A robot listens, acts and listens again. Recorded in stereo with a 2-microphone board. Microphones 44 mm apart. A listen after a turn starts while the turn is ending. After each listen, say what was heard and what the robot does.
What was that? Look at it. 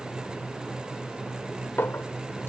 The clink: about 60° left or 120° left. Turn 60° left.
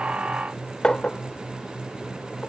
So it is at 20° left. Turn 20° left.
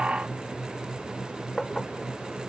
Facing the clink.